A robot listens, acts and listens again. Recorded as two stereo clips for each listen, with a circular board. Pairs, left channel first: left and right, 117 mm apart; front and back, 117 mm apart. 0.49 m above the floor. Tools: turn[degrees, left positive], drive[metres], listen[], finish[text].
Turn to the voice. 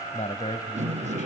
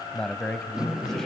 Thought: The man speaking: 85° left.
Action: turn[85]
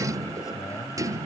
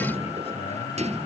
Action: listen[]
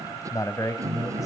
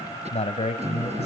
Thought: The man speaking is now 30° left.
Action: turn[30]
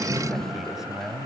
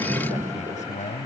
Action: finish[Facing the man speaking, 2 to 4 m away.]